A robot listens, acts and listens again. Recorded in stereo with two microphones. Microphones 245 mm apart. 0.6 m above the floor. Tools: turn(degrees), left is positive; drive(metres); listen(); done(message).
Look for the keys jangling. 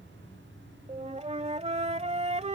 listen()
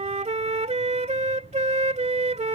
listen()
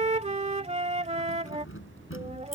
turn(degrees=60)
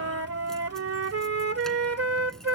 listen()
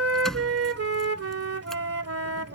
done("Found it: keys jangling, straight ahead.")